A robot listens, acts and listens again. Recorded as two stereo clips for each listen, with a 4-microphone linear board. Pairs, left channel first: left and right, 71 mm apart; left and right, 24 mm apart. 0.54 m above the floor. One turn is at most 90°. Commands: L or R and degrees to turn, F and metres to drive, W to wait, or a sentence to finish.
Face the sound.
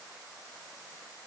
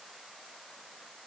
W
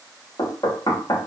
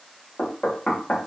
L60
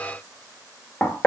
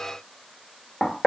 L20
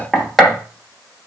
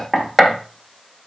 Found it: knocking, straight ahead, 1 to 2 m away.